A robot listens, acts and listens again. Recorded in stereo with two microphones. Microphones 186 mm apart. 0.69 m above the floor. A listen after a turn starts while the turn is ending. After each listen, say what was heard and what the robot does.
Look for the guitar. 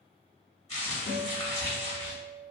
Turn 90° left.
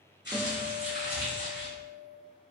So it is at 15° right. Turn 15° right.
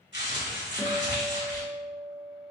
Facing the guitar.